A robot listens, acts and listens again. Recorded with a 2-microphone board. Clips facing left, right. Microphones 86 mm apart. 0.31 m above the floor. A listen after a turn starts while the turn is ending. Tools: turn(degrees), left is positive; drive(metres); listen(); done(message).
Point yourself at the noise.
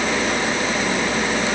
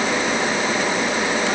listen()
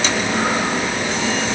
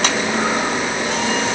listen()
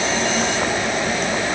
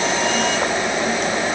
done("I can't make out anything.")